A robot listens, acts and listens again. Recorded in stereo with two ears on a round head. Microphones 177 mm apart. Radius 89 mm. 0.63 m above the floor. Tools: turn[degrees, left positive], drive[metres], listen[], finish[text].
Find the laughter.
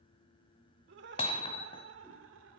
Thought: The laughter: about 70° right or 110° right.
Action: turn[-70]
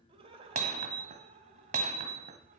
Thought: So it is at 35° right.
Action: turn[-35]
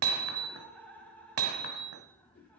Thought: The laughter is now 10° left.
Action: turn[10]
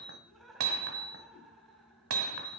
Action: finish[Facing the laughter.]